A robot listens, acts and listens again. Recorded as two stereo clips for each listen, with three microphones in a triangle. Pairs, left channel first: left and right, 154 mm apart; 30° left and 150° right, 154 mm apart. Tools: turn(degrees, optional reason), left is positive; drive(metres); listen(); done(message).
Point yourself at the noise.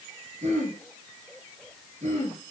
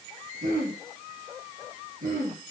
turn(degrees=-125, reason="The throat clearing: 125° right.")
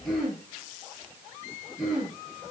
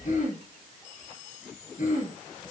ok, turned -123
done("Facing the throat clearing.")